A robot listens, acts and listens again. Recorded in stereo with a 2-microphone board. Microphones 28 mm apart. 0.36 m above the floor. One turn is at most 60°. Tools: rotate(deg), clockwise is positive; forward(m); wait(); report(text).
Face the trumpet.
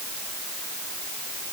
wait()
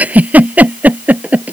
wait()
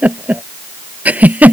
report("I can't make out a trumpet to turn to.")